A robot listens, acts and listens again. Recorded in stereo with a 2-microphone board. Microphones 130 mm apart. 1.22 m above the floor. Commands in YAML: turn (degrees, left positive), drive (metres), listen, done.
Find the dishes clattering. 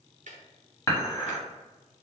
turn: 20
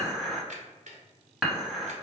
done: "Found it: dishes clattering, straight ahead, 1 to 2 m away."